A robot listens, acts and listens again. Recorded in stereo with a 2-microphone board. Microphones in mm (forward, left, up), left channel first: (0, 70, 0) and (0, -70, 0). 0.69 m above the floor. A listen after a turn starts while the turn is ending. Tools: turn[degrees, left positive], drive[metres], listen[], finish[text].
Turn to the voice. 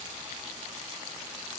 Action: listen[]
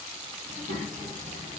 Thought: The child speaking: about 70° right or 110° right.
Action: turn[-70]
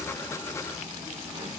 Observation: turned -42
Thought: So it is at 30° right.
Action: turn[-30]
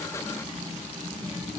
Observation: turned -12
Thought: The child speaking is now 15° right.
Action: turn[-15]
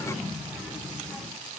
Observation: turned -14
Action: finish[Found it: a child speaking, straight ahead.]